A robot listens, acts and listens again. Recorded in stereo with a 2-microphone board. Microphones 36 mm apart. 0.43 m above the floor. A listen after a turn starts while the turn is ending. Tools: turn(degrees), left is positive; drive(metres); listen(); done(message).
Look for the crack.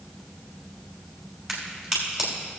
turn(degrees=-30)
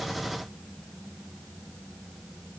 listen()
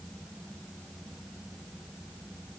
done("I heard a crack, but can't make it out now. It was about 25° left or 145° right.")